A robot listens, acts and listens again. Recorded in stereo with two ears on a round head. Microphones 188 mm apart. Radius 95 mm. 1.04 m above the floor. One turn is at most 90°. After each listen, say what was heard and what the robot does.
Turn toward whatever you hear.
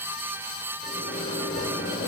The microwave: about 35° left or 145° left. Turn 35° left.
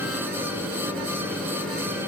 Found it: a microwave, straight ahead.